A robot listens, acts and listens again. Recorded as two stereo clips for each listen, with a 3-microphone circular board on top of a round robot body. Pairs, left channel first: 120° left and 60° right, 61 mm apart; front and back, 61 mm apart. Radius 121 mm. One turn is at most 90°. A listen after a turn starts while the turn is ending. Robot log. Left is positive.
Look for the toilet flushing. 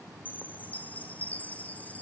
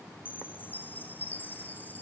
cmd idle
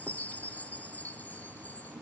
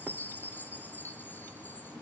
cmd idle
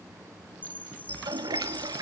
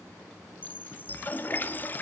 note: The toilet flushing: 60° right.
cmd yaw -60
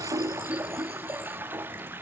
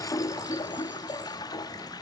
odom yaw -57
end: Facing the toilet flushing, 1 to 2 m away.